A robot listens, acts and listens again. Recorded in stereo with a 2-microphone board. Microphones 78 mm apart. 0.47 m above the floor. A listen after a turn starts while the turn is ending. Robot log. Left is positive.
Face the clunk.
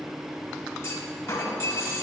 note: The clunk: about 35° left or 145° left.
cmd yaw +35
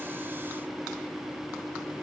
cmd idle
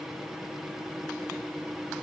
end: I heard a clunk, but can't make it out now. It was about straight ahead or 110° left.